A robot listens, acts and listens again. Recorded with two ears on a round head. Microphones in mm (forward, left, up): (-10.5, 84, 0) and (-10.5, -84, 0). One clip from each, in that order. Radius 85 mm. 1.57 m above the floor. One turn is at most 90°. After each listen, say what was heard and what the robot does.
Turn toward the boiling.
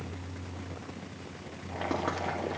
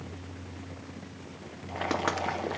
The boiling: about 20° right or 160° right. Turn 20° right.
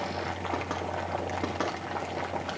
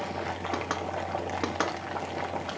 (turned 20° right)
Found it: boiling, straight ahead, 1 to 2 m away.